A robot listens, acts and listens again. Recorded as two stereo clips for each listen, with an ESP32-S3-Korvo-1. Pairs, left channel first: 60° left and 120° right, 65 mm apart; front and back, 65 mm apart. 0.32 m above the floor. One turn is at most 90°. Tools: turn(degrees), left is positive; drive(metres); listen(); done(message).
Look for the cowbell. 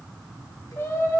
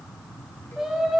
listen()
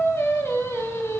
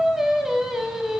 listen()
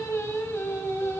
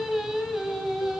done("I can't make out a cowbell, only singing.")